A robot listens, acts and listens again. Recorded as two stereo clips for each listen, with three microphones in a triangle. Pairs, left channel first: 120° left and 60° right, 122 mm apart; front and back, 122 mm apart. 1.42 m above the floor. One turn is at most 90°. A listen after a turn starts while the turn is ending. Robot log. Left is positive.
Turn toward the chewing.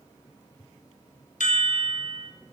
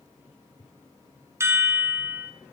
cmd idle
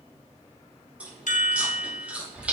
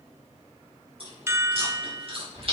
note: The chewing: 140° right.
cmd yaw -90
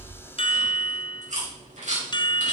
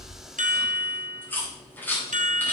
note: The chewing is now 75° right.
cmd yaw -75
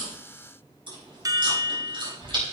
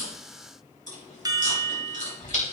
note: The chewing is now 10° right.
cmd yaw -10
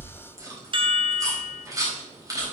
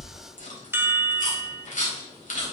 end: Found it: chewing, straight ahead.